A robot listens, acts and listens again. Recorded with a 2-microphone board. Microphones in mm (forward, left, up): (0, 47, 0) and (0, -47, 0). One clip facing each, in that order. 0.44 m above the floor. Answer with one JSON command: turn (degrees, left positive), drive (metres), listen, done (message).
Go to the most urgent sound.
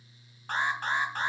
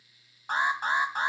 {"turn": -30}
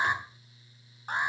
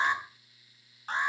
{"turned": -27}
{"turn": 15}
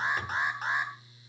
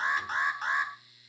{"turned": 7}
{"drive": 1.0}
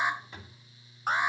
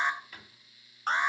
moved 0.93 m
{"turn": 10}
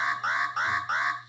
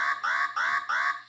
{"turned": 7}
{"drive": 1.0}
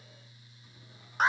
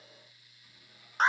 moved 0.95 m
{"drive": 1.0}
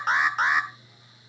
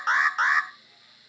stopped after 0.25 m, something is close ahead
{"done": "Arrived at the alarm, straight ahead."}